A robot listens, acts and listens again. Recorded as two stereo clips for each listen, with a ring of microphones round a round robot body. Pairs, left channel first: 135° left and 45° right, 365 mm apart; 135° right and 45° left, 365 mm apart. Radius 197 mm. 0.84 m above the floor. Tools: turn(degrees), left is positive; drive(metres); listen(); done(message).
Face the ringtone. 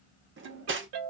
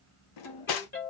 turn(degrees=-70)
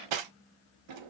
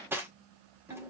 listen()
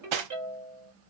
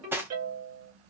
done("Facing the ringtone, 2 to 4 m away.")